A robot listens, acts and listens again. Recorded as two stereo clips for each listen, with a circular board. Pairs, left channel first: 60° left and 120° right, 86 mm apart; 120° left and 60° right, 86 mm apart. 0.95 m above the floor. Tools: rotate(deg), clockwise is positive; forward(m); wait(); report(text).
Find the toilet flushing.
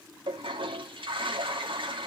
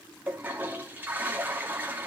rotate(130)
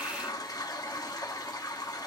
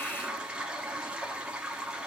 rotate(-20)
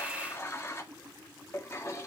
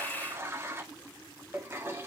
report("Facing the toilet flushing, 1 to 2 m away.")